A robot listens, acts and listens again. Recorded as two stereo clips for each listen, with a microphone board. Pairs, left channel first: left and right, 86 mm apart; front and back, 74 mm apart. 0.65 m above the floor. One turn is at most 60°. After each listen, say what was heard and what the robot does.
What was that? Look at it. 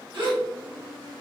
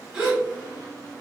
The gasp: 100° right. Turn 60° right.
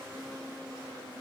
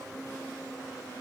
Nothing new. It was at 40° right. Turn 40° right.
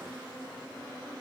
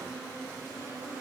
Facing where the gasp came from. I can't hear it now.